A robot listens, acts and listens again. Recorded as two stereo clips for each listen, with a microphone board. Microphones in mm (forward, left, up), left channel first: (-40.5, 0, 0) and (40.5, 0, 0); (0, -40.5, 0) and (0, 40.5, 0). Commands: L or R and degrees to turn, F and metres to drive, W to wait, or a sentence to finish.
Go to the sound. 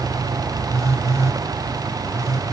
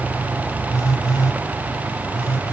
R50
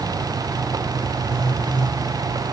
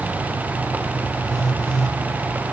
F1.0
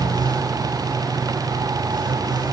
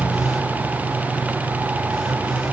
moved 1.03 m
W
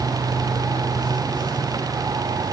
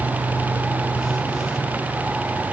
W
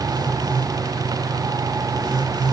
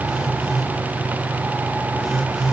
F1.0
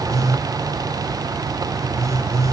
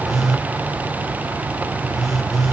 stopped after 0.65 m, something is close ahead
Arrived at the phone buzzing, straight ahead.